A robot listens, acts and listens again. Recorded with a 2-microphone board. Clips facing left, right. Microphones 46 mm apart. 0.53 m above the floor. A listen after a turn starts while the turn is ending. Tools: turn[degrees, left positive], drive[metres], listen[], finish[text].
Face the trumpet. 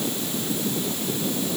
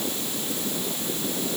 Action: listen[]
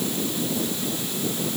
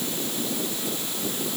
Action: listen[]
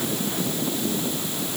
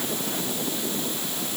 Action: finish[I can't make out a trumpet.]